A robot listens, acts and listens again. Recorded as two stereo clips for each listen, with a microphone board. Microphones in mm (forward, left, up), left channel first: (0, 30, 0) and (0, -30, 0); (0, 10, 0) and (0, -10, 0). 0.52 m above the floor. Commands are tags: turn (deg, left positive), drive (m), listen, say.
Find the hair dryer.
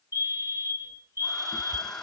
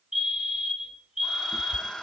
<turn deg="30"/>
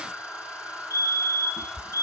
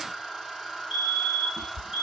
<turn deg="-20"/>
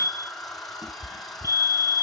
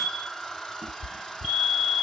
<say>Facing the hair dryer.</say>